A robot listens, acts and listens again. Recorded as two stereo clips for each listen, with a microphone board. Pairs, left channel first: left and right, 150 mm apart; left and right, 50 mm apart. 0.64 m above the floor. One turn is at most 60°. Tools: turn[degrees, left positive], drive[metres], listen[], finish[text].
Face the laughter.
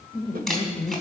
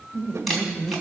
Thought: The laughter: about 40° left or 140° left.
Action: turn[40]
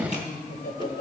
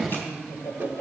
Thought: So it is at 105° left.
Action: turn[60]
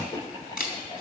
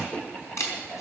Thought: The laughter is now 30° left.
Action: turn[30]
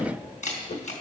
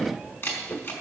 Action: listen[]
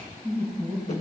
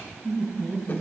Action: finish[Found it: laughter, straight ahead.]